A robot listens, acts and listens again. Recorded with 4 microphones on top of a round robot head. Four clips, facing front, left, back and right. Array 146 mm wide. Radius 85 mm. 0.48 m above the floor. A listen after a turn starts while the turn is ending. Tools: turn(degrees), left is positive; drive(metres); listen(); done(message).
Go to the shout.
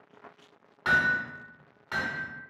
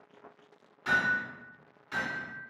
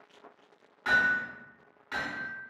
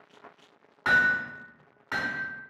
listen()
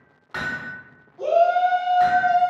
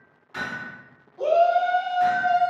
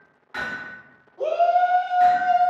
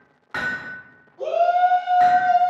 turn(degrees=160)
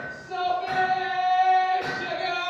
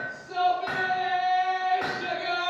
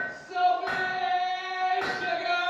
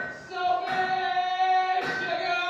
drive(metres=1.0)
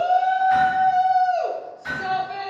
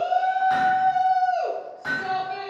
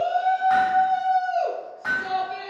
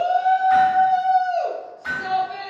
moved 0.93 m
turn(degrees=-10)
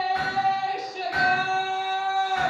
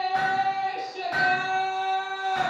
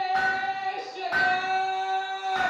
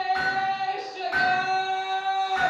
drive(metres=1.0)
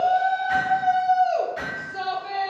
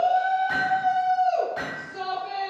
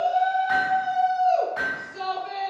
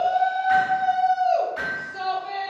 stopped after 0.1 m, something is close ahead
done("Arrived at the shout, straight ahead.")